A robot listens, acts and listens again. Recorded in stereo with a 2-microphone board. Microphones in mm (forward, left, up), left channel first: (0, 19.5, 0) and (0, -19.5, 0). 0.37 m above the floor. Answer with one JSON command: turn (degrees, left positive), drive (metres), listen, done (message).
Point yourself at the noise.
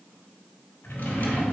{"turn": 70}
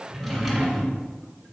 {"done": "Found it: a drawer, straight ahead."}